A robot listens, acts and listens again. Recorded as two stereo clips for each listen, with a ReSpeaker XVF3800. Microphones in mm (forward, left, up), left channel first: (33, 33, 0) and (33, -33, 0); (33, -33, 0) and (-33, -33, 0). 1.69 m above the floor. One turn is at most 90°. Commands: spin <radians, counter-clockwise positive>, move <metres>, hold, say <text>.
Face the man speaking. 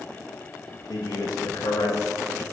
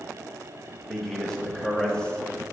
spin 1.31
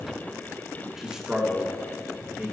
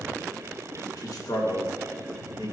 spin -0.52
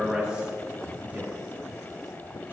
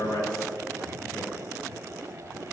spin -0.17
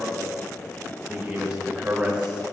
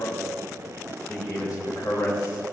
spin -0.26
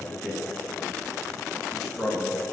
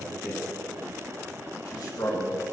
say Found it: a man speaking, straight ahead, 2 to 4 m away.